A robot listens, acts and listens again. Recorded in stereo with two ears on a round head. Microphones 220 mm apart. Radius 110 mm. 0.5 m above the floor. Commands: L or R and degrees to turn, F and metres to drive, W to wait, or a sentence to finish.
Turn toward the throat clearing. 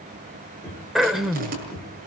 L30
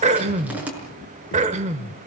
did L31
R30
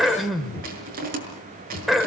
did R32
Facing the throat clearing.